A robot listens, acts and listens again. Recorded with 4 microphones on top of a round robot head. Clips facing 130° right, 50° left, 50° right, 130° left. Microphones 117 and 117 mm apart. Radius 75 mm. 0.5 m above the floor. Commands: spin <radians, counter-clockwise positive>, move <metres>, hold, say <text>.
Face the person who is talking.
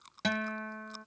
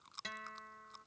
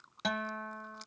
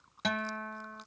hold
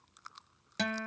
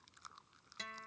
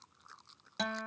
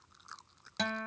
hold
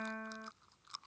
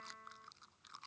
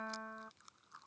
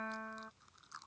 say I can't make out anyone speaking, only a guitar.